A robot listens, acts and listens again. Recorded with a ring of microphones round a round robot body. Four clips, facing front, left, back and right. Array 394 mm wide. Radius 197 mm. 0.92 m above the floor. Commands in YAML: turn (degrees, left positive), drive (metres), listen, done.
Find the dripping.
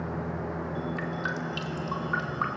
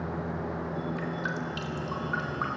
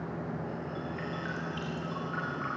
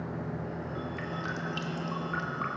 done: "Found it: dripping, straight ahead, 2 to 4 m away."